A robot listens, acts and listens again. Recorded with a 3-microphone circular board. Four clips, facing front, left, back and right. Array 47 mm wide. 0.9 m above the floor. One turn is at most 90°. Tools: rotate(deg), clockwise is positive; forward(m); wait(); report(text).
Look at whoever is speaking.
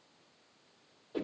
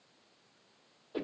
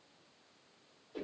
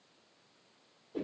wait()
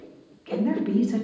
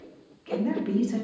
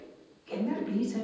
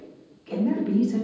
rotate(-35)
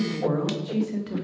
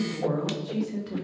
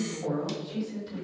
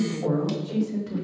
rotate(-10)
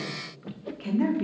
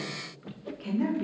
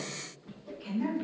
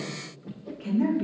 report("Facing the woman speaking, 2 to 4 m away.")